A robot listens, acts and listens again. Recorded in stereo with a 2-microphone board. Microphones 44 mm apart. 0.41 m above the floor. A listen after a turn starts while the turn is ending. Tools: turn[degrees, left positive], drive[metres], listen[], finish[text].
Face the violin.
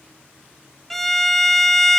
Action: turn[30]
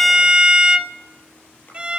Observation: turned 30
Thought: So it is at 25° right.
Action: turn[-25]
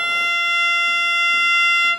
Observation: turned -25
Action: finish[Facing the violin.]